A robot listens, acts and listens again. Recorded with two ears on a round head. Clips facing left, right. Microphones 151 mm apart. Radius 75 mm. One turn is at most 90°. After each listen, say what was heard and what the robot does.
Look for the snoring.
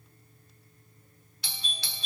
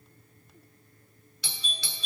Keep listening.
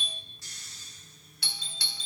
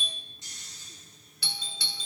The snoring: about 20° right or 160° right. Turn 20° right.
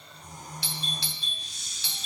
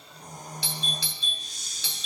So it is at 145° right. Turn 90° right.
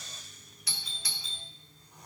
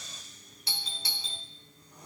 The snoring is now 95° right. Turn 90° right.
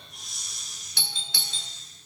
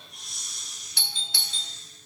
Facing the snoring, 1 to 2 m away.